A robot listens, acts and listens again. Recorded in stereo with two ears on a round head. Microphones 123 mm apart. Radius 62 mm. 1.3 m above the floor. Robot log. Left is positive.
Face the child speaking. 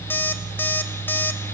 cmd idle
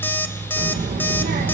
note: The child speaking: about 70° right or 110° right.
cmd yaw -70
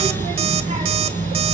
note: So it is at 45° right.
cmd yaw -45
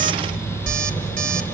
note: The child speaking is now 10° right.
cmd yaw -10
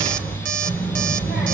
end: Found it: a child speaking, straight ahead, over 4 m away.